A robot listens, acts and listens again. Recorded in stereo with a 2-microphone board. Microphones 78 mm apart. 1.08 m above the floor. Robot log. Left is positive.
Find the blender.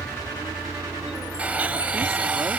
note: The blender: about 20° right or 160° right.
cmd yaw -20
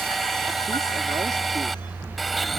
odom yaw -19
end: Found it: a blender, straight ahead.